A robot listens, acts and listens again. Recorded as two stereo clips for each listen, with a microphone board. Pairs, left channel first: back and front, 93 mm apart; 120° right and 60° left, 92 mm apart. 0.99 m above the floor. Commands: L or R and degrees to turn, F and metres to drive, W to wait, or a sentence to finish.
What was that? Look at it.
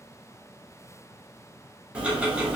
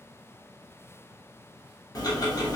R75
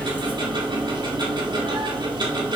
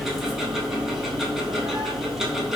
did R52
R25
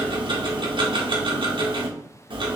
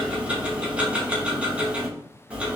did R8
R15
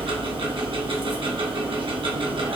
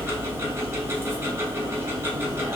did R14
Found it: ticking, straight ahead, 1 to 2 m away.